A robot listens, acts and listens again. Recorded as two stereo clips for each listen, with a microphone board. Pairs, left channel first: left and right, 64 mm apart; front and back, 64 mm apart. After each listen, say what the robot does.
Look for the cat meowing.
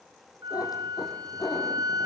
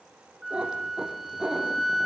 Turn 105° left.
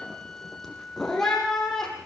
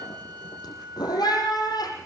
Found it: a cat meowing, straight ahead.